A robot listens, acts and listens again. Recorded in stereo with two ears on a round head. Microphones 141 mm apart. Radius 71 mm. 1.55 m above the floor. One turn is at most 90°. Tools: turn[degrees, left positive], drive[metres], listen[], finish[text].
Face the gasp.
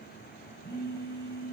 Action: listen[]
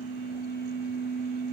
Action: listen[]
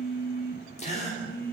Thought: The gasp: about 50° left or 130° left.
Action: turn[50]
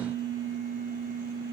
Action: listen[]
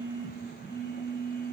Action: finish[I heard a gasp, but can't make it out now. It was about straight ahead or 80° left.]